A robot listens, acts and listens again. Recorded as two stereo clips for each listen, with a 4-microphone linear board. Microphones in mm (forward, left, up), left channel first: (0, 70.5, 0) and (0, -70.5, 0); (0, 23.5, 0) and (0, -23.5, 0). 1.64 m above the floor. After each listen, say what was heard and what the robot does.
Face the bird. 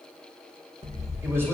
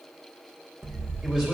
The bird: about 50° right or 130° right. Turn 50° right.
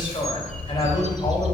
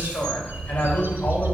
So it is at 60° right. Turn 60° right.
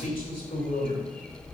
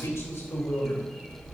The bird is now 10° left. Turn 10° left.
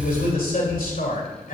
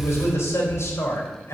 Facing the bird.